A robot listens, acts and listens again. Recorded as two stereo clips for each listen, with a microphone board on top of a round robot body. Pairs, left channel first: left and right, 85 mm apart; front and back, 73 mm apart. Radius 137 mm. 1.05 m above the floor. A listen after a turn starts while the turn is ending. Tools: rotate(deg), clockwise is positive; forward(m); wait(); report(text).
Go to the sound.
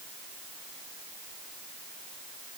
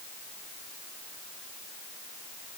wait()
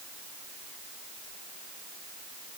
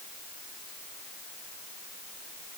wait()
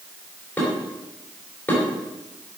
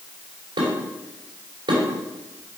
rotate(-160)
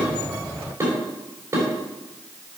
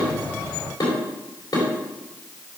rotate(30)
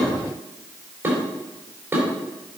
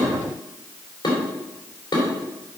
rotate(25)
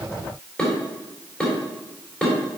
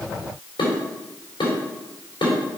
rotate(-10)
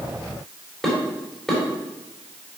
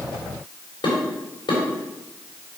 forward(1.0)
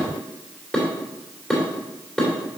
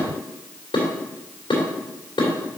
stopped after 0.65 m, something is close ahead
report("Something is in my way. I am facing the dishes clattering but have not reached it.")